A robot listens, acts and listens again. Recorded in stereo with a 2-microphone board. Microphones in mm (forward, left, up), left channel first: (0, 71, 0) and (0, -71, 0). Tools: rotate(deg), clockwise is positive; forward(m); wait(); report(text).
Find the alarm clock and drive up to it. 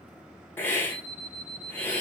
rotate(35)
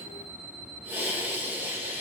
rotate(110)
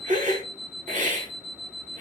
rotate(25)
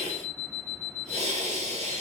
rotate(10)
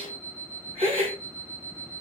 forward(1.0)
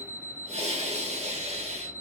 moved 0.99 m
rotate(-10)
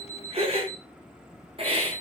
forward(1.0)
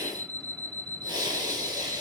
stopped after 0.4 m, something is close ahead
report("Arrived at the alarm clock, straight ahead.")